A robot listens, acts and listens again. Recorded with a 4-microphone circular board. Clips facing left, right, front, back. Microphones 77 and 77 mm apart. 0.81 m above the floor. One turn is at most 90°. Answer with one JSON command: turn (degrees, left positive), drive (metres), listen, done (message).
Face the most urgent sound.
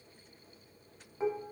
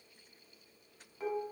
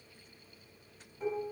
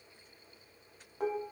{"listen": true}
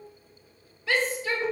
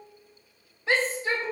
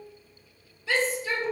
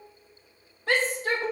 {"turn": -90}
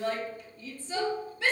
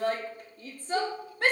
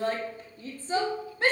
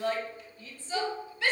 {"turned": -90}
{"turn": -50}
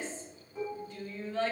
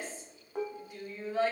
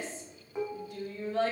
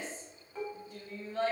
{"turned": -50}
{"turn": -10}
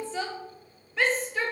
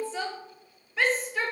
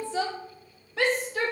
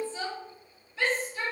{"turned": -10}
{"done": "Found it: a shout, straight ahead, 1 to 2 m away."}